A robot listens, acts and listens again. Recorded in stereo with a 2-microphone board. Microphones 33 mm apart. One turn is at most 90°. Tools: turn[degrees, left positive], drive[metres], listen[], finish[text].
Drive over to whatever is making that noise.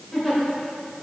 Action: turn[30]
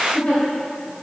Thought: So it is at 145° left.
Action: turn[90]
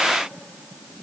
Thought: Nothing new. It was at 55° left.
Action: turn[55]
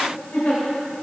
Thought: The giggle is now 60° left.
Action: turn[60]
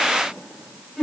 Action: drive[1.0]
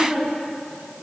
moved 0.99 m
Thought: The giggle is now 10° right.
Action: turn[-10]
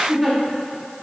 Action: drive[1.0]
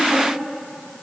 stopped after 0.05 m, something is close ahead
Action: listen[]
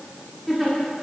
Action: finish[I am next to the giggle.]